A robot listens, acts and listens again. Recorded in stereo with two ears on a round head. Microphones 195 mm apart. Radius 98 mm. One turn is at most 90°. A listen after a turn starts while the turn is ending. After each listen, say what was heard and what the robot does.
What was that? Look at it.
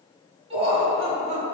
The laughter: about 30° right or 150° right. Turn 30° right.
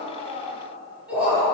Facing the laughter, 2 to 4 m away.